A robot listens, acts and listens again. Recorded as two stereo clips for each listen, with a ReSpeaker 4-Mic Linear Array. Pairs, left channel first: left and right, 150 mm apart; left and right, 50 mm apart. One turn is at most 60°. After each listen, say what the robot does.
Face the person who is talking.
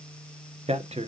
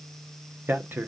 Turn 45° right.
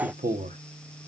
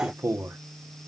Turn 60° right.
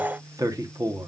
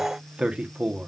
Turn 25° right.
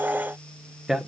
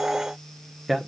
Facing the man speaking, 1 to 2 m away.